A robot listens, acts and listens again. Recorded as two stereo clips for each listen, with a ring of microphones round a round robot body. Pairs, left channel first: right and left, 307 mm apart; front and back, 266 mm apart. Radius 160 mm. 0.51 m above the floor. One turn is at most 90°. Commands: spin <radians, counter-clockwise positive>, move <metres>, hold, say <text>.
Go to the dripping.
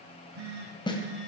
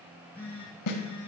hold
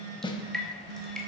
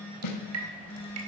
spin 1.57
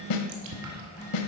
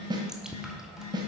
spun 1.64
spin 1.57
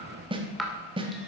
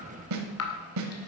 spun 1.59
move 1.0
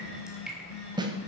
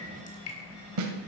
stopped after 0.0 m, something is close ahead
say Blocked. The dripping is further on, straight ahead.